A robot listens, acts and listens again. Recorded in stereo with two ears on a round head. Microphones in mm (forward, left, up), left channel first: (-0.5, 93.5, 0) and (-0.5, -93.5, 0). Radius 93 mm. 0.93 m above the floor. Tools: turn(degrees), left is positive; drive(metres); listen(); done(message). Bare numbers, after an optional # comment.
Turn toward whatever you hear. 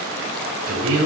turn(-90)
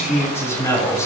# So it is at 15° left.
turn(15)
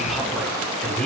done("Found it: a man speaking, straight ahead.")